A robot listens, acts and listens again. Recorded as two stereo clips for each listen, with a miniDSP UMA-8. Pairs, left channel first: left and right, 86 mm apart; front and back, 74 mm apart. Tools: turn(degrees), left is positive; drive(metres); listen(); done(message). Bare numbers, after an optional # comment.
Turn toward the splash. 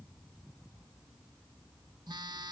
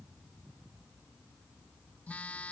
listen()
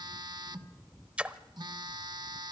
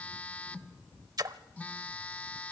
# The splash: 165° right.
turn(-165)
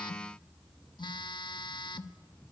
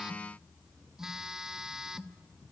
done("I heard a splash from this way, but can't make it out now.")